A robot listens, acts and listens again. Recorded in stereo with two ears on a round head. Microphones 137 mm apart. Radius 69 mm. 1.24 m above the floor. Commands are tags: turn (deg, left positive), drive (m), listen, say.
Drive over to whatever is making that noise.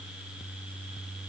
<listen/>
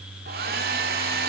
<turn deg="-70"/>
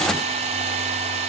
<turn deg="-40"/>
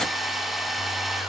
<drive m="1.0"/>
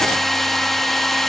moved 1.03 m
<drive m="1.0"/>
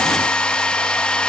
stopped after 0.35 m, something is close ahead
<say>I am next to the hair dryer.</say>